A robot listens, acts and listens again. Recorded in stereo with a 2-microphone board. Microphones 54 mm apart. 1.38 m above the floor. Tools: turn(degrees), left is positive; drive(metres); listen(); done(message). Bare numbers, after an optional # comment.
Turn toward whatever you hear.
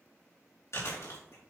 # The chewing: about 65° left or 115° left.
turn(65)
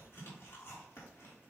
# So it is at 50° left.
turn(50)
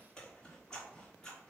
# The chewing is now 15° left.
turn(15)
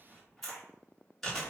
done("Facing the chewing, 2 to 4 m away.")